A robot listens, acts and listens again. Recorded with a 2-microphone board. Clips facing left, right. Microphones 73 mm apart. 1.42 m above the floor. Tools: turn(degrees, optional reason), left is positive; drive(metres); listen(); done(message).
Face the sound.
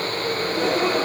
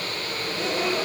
turn(degrees=50, reason="The gasp: about 50° left or 130° left.")
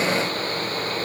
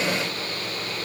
listen()
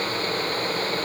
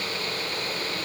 done("I heard a gasp, but can't make it out now. It was about straight ahead or 80° left.")